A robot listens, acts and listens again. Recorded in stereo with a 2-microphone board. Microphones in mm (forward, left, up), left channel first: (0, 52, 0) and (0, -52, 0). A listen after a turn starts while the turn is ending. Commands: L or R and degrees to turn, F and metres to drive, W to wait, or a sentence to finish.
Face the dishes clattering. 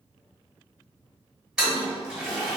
W
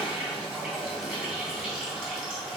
W
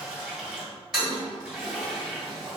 I can't make out dishes clattering to turn to.